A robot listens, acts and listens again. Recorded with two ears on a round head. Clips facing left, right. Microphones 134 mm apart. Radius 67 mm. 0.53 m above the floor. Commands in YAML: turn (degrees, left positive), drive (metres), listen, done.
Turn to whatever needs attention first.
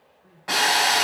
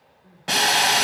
turn: 30
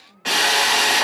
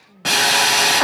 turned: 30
turn: -25
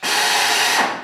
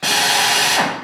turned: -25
listen: true
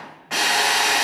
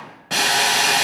listen: true
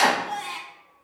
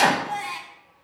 done: "Found it: crying, straight ahead, 1 to 2 m away."